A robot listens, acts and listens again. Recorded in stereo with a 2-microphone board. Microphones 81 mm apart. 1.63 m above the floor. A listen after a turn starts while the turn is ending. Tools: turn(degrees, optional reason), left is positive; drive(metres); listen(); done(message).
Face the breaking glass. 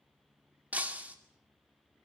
turn(degrees=-20, reason="The breaking glass: about 20° right or 160° right.")
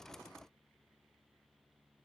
listen()
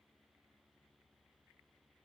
done("I heard breaking glass, but can't make it out now. It was about straight ahead or 140° right.")